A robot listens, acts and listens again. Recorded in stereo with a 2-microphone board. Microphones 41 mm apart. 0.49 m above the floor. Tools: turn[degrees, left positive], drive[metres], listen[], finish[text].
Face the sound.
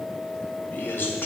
Thought: The man speaking: about 60° left or 120° left.
Action: turn[60]
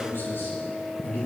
Thought: So it is at 65° left.
Action: turn[65]
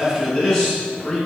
Thought: The man speaking is now 10° left.
Action: turn[10]
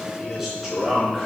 Action: finish[Facing the man speaking, over 4 m away.]